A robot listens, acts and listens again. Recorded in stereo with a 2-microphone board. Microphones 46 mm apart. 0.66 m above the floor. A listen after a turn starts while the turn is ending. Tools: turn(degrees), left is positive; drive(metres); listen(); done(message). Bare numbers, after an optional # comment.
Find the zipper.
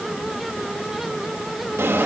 listen()
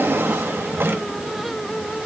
listen()
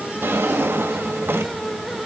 done("I can't make out a zipper, only a drawer.")